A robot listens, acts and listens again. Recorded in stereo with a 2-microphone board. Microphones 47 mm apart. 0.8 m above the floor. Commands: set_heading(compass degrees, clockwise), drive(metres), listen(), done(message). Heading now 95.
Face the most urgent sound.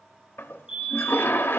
set_heading(115)
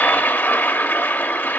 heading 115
listen()
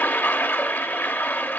listen()
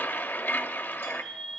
done("Found it: a fire alarm, straight ahead.")